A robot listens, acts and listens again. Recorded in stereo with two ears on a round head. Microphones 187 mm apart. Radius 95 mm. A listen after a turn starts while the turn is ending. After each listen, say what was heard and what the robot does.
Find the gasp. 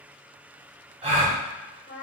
The gasp: about 30° right or 150° right. Turn 30° right.
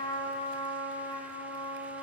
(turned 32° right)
Keep listening.
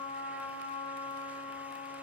I heard a gasp, but can't make it out now. It was about straight ahead or 120° right.